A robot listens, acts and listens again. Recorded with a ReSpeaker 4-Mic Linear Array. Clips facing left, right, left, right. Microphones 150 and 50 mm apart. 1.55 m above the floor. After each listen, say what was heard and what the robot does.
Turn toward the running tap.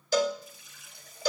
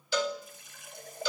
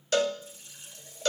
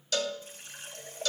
The running tap: about 50° right or 130° right. Turn 50° right.
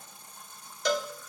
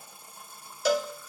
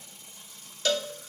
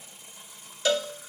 So it is at 10° right. Turn 10° right.
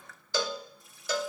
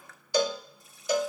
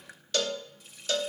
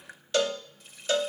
Found it: a running tap, straight ahead, 1 to 2 m away.